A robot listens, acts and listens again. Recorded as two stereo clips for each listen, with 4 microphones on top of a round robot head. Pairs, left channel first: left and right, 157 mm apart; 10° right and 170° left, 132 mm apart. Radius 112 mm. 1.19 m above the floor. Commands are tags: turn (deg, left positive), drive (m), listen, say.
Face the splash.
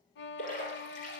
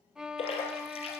<turn deg="35"/>
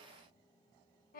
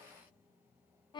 <say>Facing where the splash came from. I can't hear it now.</say>